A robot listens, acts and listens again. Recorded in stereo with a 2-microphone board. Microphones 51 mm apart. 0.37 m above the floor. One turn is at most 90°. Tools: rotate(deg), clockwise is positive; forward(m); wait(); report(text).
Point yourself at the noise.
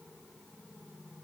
wait()
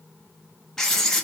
rotate(-30)
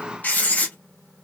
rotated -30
rotate(-90)
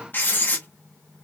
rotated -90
rotate(-50)
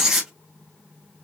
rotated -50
rotate(10)
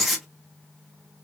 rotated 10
report("Facing the writing.")